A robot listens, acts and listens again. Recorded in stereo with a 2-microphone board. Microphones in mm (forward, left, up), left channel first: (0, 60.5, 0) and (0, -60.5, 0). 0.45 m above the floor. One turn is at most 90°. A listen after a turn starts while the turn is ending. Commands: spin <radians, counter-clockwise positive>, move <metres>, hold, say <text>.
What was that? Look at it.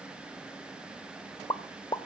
spin 0.61
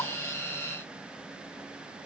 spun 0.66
hold
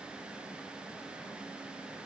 say I heard a pop, but can't make it out now. It was about straight ahead or 105° left.